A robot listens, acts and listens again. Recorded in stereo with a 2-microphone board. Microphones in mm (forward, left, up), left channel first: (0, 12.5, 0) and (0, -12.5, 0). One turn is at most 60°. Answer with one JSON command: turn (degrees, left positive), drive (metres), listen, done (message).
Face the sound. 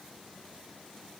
{"listen": true}
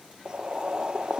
{"turn": -35}
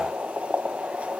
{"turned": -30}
{"turn": -60}
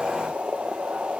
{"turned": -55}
{"turn": -55}
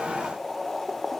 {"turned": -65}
{"turn": 10}
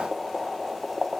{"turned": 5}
{"done": "Found it: boiling, straight ahead."}